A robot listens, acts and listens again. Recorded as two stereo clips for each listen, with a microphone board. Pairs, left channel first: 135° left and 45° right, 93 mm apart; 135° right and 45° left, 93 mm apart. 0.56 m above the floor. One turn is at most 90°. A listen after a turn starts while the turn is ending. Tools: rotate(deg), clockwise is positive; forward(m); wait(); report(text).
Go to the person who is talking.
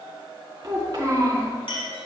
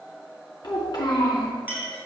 rotate(90)
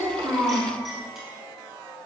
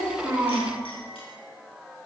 rotate(-20)
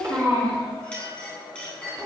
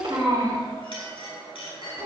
forward(1.0)
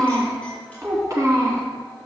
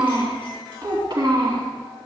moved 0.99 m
forward(1.0)
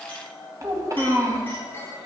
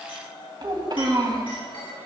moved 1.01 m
forward(1.0)
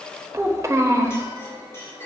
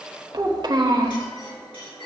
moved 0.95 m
rotate(-10)
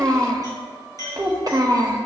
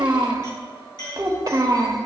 forward(1.0)
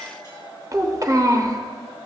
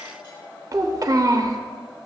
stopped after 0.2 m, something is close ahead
report("Arrived at the child speaking, straight ahead.")